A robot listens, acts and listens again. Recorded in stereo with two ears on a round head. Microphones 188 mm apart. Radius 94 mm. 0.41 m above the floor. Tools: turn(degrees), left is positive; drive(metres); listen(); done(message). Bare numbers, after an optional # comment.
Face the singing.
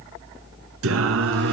# The singing: about 65° right or 115° right.
turn(-65)
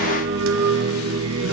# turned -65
# So it is at 80° right.
turn(-80)
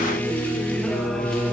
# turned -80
done("Facing the singing.")